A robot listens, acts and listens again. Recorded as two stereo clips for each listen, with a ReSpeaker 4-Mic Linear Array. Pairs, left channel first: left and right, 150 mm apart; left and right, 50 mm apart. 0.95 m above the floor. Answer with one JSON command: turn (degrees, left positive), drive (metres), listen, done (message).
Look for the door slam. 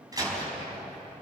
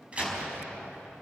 {"turn": -25}
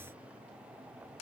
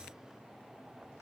{"listen": true}
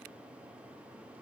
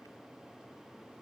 {"done": "I heard a door slam, but can't make it out now. It was about straight ahead or 130° right."}